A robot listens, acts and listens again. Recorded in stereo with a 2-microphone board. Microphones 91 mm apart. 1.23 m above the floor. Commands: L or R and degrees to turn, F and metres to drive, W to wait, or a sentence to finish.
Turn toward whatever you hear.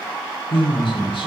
L70
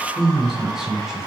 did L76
Facing the man speaking, over 4 m away.